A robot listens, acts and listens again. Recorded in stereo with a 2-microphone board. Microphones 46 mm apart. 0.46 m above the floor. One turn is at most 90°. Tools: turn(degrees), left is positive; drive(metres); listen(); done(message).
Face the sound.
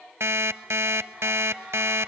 turn(degrees=-90)
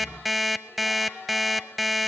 done("Found it: an alarm clock, straight ahead, under 1 m away.")